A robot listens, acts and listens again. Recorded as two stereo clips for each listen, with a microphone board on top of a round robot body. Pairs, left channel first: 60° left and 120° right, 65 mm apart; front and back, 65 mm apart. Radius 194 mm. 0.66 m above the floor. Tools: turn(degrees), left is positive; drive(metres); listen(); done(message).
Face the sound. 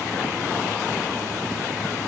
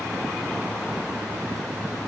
listen()
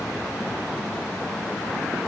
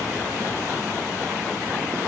listen()
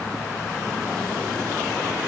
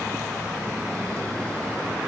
done("I can't make out anything.")